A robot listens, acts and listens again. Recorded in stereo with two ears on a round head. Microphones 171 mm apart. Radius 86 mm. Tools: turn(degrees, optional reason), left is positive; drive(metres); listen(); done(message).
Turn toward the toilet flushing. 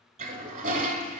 turn(degrees=-40, reason="The toilet flushing: about 40° right or 140° right.")
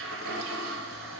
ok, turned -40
turn(degrees=-95, reason="So it is at 95° right.")
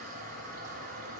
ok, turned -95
turn(degrees=-50, reason="The toilet flushing is now 50° right.")
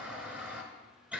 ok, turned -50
turn(degrees=-10, reason="The toilet flushing is now 10° right.")
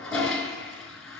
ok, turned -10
done("Facing the toilet flushing.")